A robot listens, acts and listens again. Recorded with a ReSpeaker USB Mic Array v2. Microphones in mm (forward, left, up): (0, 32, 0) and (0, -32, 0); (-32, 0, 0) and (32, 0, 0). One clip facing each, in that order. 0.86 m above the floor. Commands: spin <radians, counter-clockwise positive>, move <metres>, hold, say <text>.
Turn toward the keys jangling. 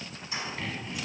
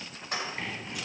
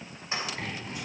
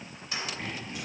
spin -2.09
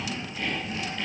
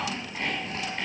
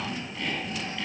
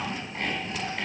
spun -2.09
hold
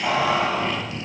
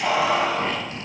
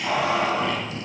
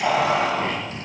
say Found it: keys jangling, straight ahead, 2 to 4 m away.